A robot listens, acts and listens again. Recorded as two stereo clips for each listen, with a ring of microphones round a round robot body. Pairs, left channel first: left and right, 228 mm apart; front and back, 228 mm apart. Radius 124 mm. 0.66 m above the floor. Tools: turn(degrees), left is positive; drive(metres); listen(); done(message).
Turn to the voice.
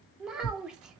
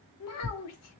done("Found it: a child speaking, straight ahead.")